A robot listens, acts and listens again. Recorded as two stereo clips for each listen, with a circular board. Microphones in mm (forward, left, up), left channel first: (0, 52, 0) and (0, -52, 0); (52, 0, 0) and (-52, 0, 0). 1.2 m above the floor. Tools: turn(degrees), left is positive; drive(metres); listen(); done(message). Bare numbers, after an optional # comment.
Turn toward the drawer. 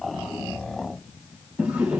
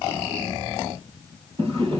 # The drawer: 165° right.
turn(-165)
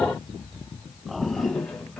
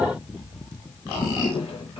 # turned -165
# The drawer is now 10° left.
turn(10)
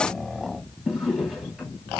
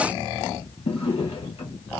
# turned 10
done("Facing the drawer, 2 to 4 m away.")